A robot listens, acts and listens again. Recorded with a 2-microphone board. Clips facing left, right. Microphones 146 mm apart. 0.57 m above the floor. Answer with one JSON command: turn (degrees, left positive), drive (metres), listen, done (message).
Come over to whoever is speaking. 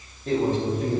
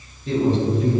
{"turn": 50}
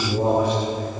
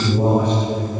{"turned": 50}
{"turn": 10}
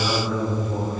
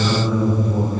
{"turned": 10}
{"drive": 1.0}
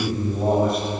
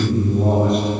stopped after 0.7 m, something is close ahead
{"done": "I am next to the man speaking."}